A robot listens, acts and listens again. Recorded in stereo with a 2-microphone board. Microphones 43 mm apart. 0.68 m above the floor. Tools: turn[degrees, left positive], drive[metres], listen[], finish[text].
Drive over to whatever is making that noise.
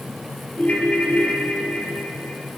Thought: The ringtone: about 40° left or 140° left.
Action: turn[40]
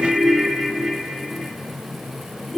Action: drive[1.0]
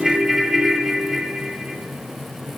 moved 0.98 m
Action: drive[1.0]
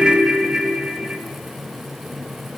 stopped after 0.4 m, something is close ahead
Thought: The ringtone is now 15° right.
Action: turn[-15]
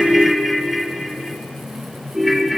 Action: finish[Arrived at the ringtone, straight ahead.]